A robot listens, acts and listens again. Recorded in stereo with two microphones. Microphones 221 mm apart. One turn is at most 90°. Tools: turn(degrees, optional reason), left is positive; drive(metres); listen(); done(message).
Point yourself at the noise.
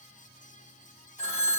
turn(degrees=30, reason="The phone ringing: about 30° left or 150° left.")
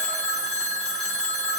done("Found it: a phone ringing, straight ahead, 1 to 2 m away.")